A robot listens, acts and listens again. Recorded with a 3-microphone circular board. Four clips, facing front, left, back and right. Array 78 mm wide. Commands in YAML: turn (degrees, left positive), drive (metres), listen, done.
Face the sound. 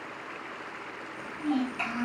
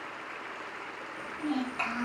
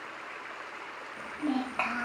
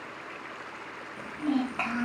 turn: -160
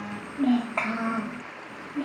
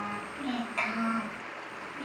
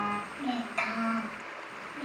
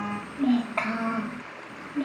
turn: -50
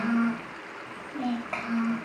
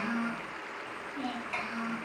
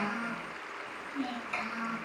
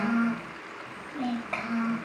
turn: -40
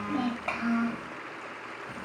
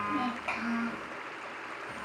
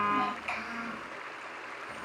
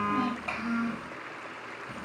turn: 10
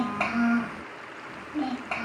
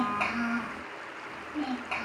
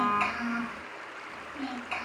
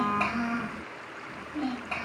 done: "Found it: a child speaking, straight ahead, 1 to 2 m away."